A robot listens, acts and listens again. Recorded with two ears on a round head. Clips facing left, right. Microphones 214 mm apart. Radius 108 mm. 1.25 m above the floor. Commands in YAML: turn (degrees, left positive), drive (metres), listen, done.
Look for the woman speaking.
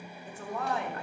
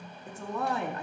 turn: -90
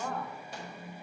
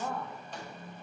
done: "Found it: a woman speaking, straight ahead."